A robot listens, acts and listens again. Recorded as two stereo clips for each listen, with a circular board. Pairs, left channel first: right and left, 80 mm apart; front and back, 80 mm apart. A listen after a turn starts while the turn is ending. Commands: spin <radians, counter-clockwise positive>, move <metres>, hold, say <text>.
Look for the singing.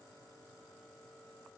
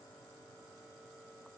hold
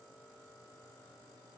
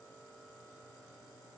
hold
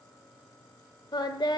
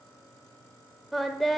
spin -1.57
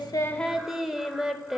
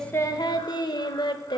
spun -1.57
say Facing the singing.